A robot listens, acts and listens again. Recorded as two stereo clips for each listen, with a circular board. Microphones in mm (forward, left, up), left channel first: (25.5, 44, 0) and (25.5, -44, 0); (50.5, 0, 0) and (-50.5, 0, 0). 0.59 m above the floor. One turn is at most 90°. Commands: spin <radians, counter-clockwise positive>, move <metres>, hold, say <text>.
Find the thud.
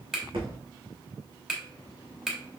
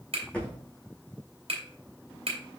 spin -1.40
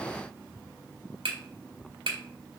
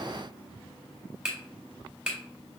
say I heard a thud from this way, but can't make it out now.